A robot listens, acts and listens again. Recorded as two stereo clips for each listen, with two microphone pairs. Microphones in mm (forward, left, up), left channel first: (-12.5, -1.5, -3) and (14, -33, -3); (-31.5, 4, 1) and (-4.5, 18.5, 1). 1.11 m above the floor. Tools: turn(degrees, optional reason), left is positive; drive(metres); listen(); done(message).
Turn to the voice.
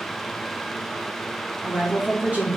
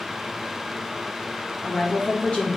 turn(degrees=-105, reason="The woman speaking: 105° right.")
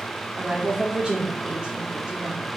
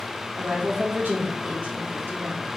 turn(degrees=15, reason="The woman speaking is now 15° left.")
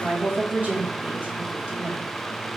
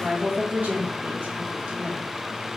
done("Found it: a woman speaking, straight ahead.")